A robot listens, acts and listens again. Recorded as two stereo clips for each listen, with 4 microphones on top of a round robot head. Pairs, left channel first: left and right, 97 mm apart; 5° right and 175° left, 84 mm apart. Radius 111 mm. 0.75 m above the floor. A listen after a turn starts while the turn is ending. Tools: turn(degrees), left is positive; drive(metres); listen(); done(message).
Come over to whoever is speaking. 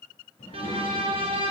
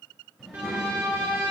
turn(degrees=90)
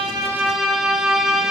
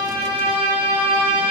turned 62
turn(degrees=25)
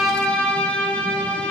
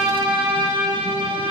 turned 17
turn(degrees=10)
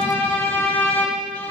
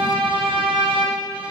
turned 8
done("Facing where the child speaking came from. I can't hear it now. I did not reach it.")